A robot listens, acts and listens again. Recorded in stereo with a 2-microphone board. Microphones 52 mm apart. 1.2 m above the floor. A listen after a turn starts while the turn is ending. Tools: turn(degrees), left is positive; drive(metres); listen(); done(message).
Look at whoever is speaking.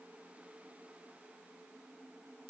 listen()
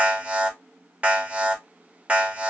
listen()
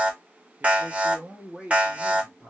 turn(degrees=-30)
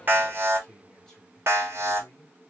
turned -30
turn(degrees=20)
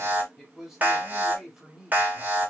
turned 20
done("Found it: a man speaking, straight ahead.")